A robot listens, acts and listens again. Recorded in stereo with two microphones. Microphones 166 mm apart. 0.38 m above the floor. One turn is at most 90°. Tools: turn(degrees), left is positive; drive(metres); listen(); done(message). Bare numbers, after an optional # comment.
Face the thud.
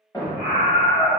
# The thud: about 20° left or 160° left.
turn(20)
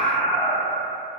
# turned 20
listen()
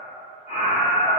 done("I heard a thud, but can't make it out now. It was about straight ahead or 140° left.")